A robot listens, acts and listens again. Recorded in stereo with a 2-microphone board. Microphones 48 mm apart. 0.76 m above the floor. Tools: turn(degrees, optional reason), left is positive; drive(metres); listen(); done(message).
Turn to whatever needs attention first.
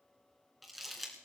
listen()
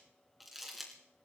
listen()
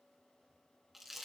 done("I can't make out anything urgent, only crumpling.")